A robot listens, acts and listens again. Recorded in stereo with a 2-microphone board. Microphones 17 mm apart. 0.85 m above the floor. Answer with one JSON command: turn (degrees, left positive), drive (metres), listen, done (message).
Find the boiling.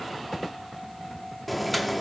{"turn": 30}
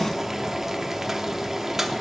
{"turn": -30}
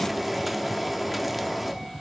{"done": "Found it: boiling, straight ahead, under 1 m away."}